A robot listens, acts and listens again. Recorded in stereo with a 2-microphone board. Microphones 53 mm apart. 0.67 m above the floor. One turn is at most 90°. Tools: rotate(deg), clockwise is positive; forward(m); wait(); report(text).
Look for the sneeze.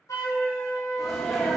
rotate(30)
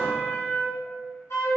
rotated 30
wait()
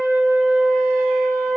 report("I heard a sneeze, but can't make it out now. It was about 20° left or 140° right.")